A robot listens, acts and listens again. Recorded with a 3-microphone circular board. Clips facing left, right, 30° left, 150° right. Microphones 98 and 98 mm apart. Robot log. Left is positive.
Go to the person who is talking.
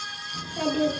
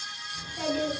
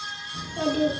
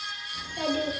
note: The child speaking: 70° left.
cmd yaw +70
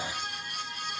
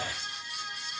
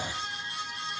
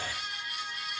cmd fwd 1.0
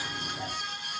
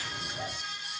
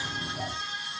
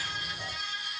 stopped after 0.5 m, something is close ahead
end: Blocked. The child speaking is further on, straight ahead.